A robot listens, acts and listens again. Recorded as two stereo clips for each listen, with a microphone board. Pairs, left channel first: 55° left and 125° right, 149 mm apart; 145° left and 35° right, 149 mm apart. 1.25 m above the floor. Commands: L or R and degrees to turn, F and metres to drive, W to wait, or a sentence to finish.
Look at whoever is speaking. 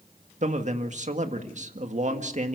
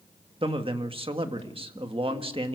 R85
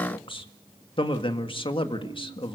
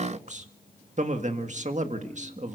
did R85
Facing the man speaking, 1 to 2 m away.